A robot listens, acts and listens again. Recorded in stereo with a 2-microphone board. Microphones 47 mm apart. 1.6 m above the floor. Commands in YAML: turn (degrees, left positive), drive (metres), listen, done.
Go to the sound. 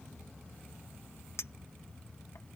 turn: 70
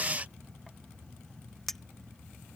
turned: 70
drive: 1.0
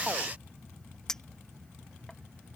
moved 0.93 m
turn: 15
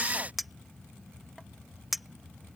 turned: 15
drive: 1.0
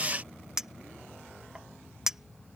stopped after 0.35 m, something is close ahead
turn: -10
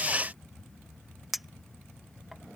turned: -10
done: "Arrived at the clink, straight ahead."